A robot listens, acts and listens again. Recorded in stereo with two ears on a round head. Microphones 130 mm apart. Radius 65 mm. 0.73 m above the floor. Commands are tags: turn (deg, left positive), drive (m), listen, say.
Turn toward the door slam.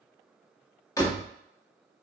<turn deg="25"/>
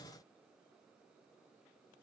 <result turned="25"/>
<listen/>
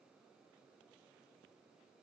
<say>I heard a door slam, but can't make it out now. It was about straight ahead or 130° left.</say>